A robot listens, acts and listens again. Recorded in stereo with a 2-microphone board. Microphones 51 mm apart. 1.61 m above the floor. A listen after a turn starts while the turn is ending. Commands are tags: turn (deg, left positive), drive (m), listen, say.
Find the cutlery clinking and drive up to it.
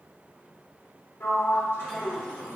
<listen/>
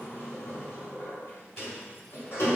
<listen/>
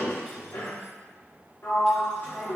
<say>I can't make out cutlery clinking, only a sliding door.</say>